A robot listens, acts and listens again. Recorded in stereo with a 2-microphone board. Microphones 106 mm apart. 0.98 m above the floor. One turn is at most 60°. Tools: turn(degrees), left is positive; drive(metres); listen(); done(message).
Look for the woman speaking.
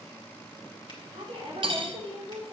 turn(degrees=-60)
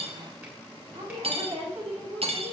turn(degrees=-60)
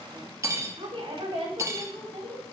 turn(degrees=-50)
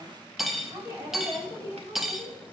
turn(degrees=-25)
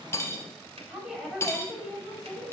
done("Found it: a woman speaking, straight ahead.")